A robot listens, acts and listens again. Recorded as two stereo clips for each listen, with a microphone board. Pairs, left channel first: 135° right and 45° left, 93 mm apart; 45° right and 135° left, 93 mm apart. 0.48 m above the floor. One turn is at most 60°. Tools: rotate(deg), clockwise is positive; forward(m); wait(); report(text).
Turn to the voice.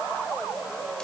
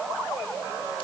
wait()
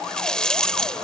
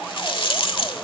wait()
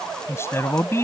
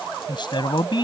rotate(60)
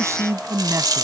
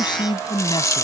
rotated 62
rotate(10)
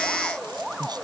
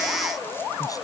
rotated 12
report("Found it: a man speaking, straight ahead.")